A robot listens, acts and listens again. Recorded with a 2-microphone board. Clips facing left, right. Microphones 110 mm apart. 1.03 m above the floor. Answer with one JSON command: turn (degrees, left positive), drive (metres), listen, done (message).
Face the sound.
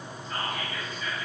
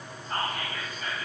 {"turn": -45}
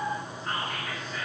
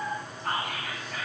{"turn": -90}
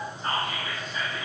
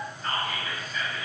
{"turn": 25}
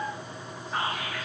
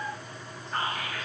{"done": "Found it: whispering, straight ahead."}